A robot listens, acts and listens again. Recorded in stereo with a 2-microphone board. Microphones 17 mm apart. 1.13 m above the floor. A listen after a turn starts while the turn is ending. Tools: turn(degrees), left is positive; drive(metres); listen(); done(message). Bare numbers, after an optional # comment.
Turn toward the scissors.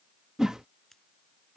# The scissors: about 15° left or 165° left.
turn(15)
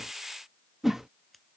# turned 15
done("Found it: scissors, straight ahead.")